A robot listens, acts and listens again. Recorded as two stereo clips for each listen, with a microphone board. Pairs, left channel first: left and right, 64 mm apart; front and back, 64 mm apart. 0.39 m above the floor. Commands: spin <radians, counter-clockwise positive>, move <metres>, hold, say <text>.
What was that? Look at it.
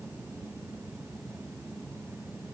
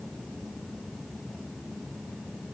hold
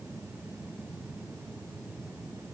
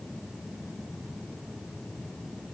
hold
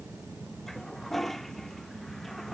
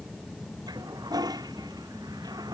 spin 3.14
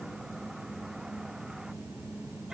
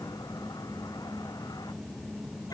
hold
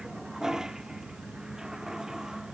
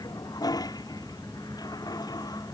spin -0.17
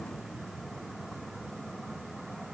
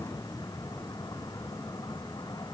hold
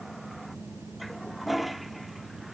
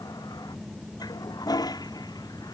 say Found it: a toilet flushing, straight ahead.